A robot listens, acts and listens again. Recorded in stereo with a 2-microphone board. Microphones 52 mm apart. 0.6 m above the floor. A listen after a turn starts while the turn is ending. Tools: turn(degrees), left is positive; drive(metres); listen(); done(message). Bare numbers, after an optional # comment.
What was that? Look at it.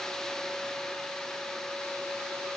listen()
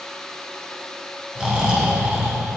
# The snoring: about 15° right or 165° right.
turn(-15)
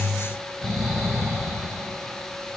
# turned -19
done("Facing the snoring, 2 to 4 m away.")